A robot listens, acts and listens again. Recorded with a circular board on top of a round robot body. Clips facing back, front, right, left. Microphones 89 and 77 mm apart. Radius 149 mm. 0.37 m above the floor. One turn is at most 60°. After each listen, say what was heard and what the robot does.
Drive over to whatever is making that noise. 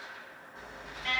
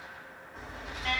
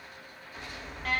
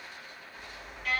The alarm: 50° right. Turn 50° right.
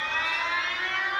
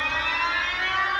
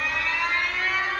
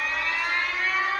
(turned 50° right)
Drive 1.0 m forward.
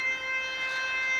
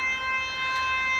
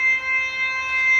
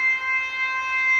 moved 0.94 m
The alarm is now 10° left. Turn 10° left.
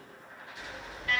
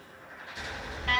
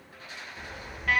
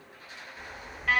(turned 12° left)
Drive 1.0 m forward.
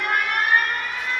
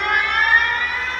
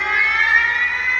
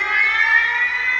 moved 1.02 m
Drive 1.0 m forward.
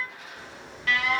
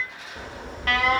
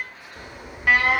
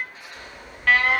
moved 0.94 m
The alarm is now 15° right. Turn 15° right.
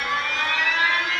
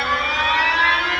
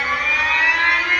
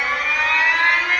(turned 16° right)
Drive 1.0 m forward.
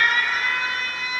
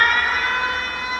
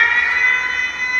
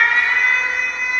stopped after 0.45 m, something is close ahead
I am next to the alarm.